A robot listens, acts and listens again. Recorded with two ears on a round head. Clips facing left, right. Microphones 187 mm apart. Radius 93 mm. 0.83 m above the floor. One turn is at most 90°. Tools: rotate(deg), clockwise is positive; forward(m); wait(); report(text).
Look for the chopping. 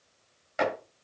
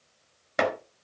rotate(65)
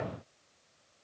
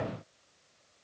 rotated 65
wait()
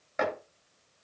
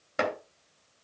rotate(45)
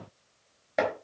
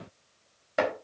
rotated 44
report("Found it: chopping, straight ahead.")